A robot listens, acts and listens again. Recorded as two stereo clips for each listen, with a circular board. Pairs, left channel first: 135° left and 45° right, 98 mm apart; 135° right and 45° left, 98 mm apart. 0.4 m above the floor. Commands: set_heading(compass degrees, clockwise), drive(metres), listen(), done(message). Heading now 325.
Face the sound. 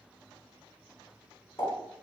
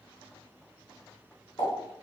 set_heading(140)
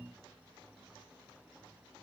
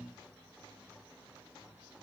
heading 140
done("I heard a pop from this way, but can't make it out now.")